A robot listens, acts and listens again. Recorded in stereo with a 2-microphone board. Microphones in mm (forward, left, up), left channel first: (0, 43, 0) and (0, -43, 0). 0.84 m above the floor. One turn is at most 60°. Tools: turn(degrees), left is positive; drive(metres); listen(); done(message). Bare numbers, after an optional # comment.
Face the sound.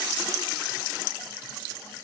listen()
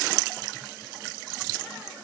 listen()
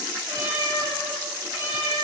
# The cat meowing: about 30° right or 150° right.
turn(-30)
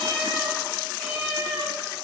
# So it is at 10° left.
turn(10)
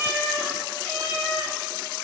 done("Found it: a cat meowing, straight ahead.")